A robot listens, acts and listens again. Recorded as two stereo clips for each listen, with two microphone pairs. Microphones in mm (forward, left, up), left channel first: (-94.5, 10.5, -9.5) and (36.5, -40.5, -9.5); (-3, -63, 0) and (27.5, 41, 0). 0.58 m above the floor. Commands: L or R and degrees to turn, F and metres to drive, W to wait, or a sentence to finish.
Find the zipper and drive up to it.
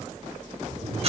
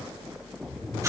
R65
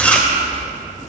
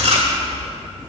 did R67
F1.0
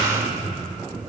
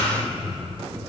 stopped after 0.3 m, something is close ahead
Something is in my way. I am facing the zipper but have not reached it.